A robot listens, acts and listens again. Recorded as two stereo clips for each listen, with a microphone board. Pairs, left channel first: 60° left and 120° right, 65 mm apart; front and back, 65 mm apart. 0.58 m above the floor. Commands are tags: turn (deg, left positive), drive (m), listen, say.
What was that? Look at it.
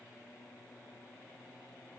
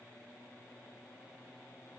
<listen/>
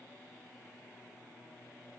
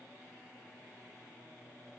<listen/>
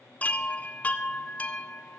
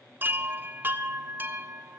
<turn deg="125"/>
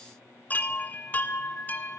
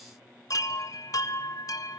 <say>Found it: a chime, straight ahead.</say>